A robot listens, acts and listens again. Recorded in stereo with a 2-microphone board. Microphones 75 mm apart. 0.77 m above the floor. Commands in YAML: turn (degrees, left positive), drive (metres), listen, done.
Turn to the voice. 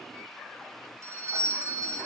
listen: true
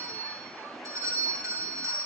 listen: true
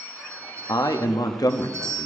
turn: 55
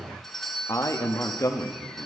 turn: 50
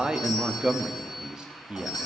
turn: -15
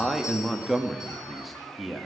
done: "Facing the man speaking, under 1 m away."